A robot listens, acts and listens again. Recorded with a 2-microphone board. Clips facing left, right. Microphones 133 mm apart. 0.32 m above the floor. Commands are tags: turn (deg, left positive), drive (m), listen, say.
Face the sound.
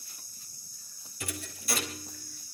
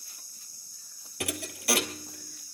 <turn deg="-75"/>
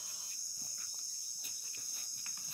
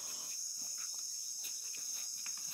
<listen/>
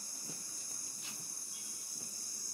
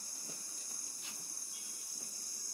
<say>I heard a thud, but can't make it out now. It was about straight ahead or 30° right.</say>